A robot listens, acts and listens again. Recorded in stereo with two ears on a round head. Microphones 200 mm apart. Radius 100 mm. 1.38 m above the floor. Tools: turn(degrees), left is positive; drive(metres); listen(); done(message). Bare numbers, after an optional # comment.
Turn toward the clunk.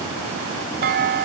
# The clunk: about 45° right or 135° right.
turn(-45)
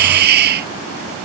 listen()
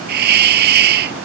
done("I heard a clunk, but can't make it out now. It was about straight ahead or 90° right.")